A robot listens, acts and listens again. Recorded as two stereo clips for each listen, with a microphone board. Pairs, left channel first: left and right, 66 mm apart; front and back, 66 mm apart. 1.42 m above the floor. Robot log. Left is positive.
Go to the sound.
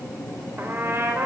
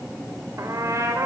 note: The trumpet: 140° right.
cmd yaw -140
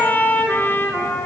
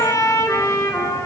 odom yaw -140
note: The trumpet is now 35° left.
cmd yaw +35
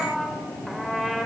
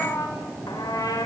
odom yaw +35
cmd fwd 1.0
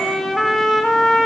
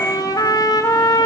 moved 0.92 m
cmd fwd 1.0
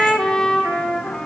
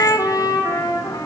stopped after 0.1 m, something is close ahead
note: The trumpet is now 10° left.
cmd yaw +10
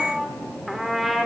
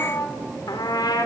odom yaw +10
end: Something is in my way. I am facing the trumpet but have not reached it.